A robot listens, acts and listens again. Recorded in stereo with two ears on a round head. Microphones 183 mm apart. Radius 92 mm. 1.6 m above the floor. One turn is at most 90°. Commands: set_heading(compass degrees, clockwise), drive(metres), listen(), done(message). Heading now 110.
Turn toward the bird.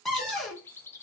set_heading(80)
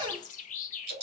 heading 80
set_heading(350)
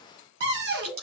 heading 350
set_heading(300)
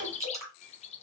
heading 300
set_heading(265)
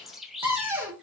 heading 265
done("Facing the bird.")